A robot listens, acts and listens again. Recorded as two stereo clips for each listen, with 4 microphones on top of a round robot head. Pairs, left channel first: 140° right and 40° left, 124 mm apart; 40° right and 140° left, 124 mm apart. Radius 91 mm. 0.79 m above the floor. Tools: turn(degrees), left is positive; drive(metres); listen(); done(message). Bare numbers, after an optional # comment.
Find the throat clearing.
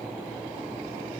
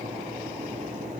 listen()
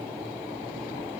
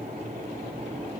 listen()
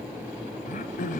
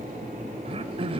# The throat clearing: 170° right.
turn(-170)
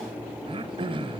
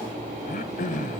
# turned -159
# The throat clearing is now 10° right.
turn(-10)
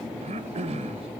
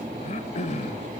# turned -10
done("Facing the throat clearing, 1 to 2 m away.")